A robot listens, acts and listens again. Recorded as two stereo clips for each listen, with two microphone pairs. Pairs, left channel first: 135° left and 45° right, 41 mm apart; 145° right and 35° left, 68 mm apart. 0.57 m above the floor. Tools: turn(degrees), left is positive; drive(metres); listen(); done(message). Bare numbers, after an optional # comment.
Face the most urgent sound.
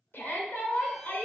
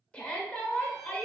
# The shout: 145° left.
turn(145)
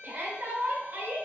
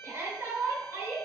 # The shout is now 15° right.
turn(-15)
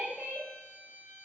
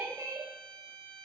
done("Facing the shout.")